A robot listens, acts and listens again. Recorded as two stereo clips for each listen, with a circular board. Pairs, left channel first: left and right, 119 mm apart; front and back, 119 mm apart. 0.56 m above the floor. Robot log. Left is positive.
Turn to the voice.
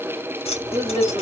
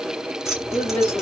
note: The woman speaking: 75° right.
cmd yaw -75
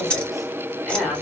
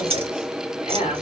end: Found it: a woman speaking, straight ahead.